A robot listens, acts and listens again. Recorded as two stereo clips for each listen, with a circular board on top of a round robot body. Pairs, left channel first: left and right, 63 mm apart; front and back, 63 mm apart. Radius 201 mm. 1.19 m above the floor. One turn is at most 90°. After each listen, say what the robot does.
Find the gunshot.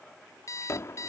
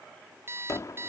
Turn 35° left.
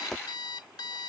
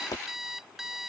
Found it: a gunshot, straight ahead.